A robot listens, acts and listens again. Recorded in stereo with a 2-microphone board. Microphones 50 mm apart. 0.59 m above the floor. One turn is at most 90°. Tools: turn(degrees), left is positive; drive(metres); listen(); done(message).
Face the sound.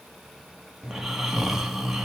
turn(degrees=-30)
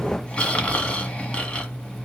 turn(degrees=25)
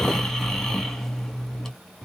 turn(degrees=10)
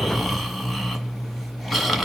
done("Facing the snoring, 1 to 2 m away.")